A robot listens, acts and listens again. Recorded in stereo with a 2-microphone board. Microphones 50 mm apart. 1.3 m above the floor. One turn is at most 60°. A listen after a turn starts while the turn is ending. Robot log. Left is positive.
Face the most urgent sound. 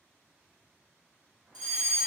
cmd yaw +30
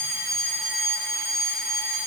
note: So it is at 15° right.
cmd yaw -15
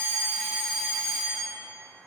end: Found it: a fire alarm, straight ahead.